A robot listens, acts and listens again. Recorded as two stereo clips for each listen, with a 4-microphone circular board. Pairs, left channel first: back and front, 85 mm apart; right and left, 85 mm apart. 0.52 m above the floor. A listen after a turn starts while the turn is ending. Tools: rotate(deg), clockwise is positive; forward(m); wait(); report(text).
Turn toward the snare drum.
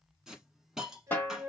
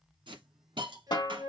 rotate(115)
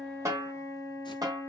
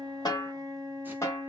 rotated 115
rotate(40)
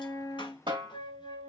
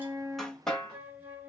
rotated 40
report("Found it: a snare drum, straight ahead.")